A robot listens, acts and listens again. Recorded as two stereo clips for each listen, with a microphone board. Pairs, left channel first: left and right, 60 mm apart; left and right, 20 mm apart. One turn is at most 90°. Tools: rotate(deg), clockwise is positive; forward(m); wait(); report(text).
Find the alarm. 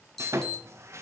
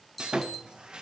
rotate(-30)
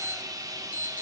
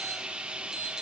rotate(25)
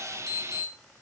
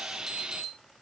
report("Found it: an alarm, straight ahead.")